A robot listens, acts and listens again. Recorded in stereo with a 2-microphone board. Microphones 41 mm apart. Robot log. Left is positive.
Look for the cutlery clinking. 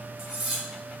cmd yaw -30
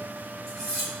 note: So it is at 15° left.
cmd yaw +15
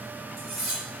end: Facing the cutlery clinking, 1 to 2 m away.